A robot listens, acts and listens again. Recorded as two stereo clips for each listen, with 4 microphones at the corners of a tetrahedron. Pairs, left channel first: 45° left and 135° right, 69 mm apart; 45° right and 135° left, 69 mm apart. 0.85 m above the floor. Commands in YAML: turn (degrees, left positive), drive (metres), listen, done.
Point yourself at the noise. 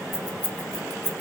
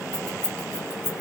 turn: 60
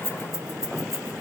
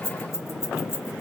done: "Found it: keys jangling, straight ahead, 1 to 2 m away."